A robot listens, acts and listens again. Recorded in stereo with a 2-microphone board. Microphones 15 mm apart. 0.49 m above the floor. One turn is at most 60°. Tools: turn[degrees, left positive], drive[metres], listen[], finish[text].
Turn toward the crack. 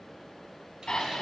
Action: listen[]
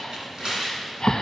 Action: listen[]
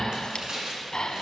Action: finish[I can't make out a crack to turn to.]